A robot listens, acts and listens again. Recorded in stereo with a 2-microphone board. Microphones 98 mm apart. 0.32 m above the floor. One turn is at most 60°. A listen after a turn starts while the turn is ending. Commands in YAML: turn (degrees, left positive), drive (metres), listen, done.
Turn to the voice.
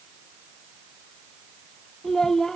turn: 30
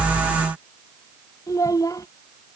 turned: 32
turn: 60
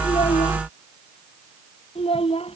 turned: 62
turn: 60
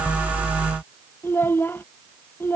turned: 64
turn: 20
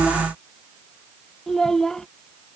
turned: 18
done: "Found it: a child speaking, straight ahead."